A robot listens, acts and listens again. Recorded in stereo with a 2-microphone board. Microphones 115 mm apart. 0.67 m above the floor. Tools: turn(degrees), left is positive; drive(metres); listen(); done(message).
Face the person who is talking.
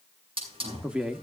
turn(degrees=-30)
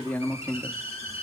turn(degrees=20)
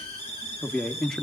done("Facing the man speaking.")